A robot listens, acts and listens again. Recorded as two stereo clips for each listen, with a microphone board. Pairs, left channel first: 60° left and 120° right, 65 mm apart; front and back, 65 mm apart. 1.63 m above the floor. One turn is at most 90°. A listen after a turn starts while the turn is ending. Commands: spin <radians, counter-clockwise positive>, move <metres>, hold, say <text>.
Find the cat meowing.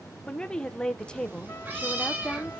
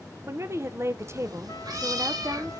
spin 1.57
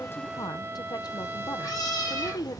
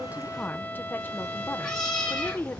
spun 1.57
spin 1.40
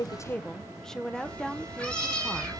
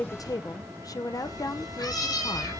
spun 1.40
spin -0.26
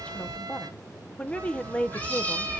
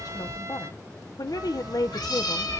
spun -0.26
say Facing the cat meowing.